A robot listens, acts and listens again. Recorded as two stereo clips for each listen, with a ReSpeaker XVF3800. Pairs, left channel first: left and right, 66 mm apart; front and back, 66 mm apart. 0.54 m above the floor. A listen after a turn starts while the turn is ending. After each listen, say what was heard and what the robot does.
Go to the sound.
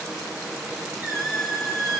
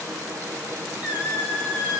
The squeak: 110° left. Turn 110° left.
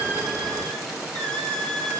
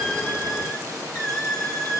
The squeak is now 15° left. Turn 15° left.
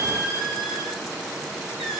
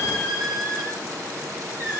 Drive 1.0 m forward.
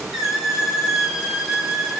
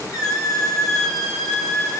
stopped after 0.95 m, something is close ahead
The squeak is now 10° right. Turn 10° right.
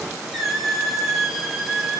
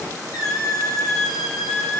Arrived at the squeak, straight ahead.